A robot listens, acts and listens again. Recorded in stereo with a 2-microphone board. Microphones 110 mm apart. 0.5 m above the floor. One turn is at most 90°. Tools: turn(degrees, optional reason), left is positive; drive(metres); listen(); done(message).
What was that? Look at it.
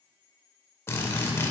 turn(degrees=25, reason="The drill: about 25° left or 155° left.")
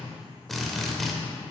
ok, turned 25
done("Found it: a drill, straight ahead, under 1 m away.")